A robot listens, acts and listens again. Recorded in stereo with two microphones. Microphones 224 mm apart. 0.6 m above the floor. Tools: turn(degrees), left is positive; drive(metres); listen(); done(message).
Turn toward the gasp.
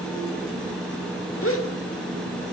turn(degrees=65)
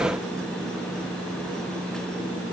listen()
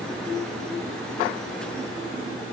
done("I heard a gasp, but can't make it out now. It was about straight ahead or 50° left.")